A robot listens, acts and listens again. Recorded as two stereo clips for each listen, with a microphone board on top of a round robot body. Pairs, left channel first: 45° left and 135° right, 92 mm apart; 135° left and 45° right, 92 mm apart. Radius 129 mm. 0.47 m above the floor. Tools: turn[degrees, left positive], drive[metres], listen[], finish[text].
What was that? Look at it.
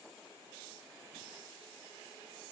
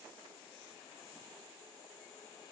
Action: listen[]
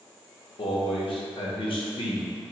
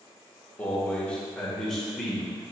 Thought: The man speaking: 45° left.
Action: turn[45]
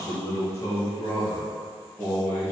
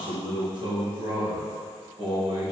Thought: The man speaking is now 20° right.
Action: turn[-20]
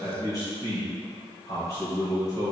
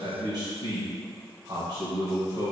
Action: finish[Found it: a man speaking, straight ahead.]